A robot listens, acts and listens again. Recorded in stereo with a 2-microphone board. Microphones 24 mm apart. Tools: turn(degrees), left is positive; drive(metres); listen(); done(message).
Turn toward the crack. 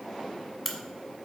turn(degrees=30)
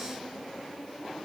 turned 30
listen()
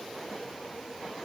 done("I heard a crack, but can't make it out now. It was about 30° right or 150° left.")